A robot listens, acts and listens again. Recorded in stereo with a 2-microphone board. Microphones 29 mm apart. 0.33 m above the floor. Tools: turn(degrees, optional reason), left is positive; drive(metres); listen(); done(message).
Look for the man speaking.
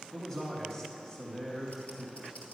turn(degrees=35, reason="The man speaking: about 35° left or 145° left.")
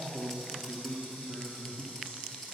turn(degrees=35, reason="The man speaking: about 35° left or 145° left.")
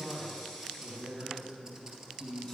turn(degrees=25, reason="The man speaking: about 25° left or 155° left.")
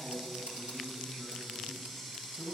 done("Facing the man speaking.")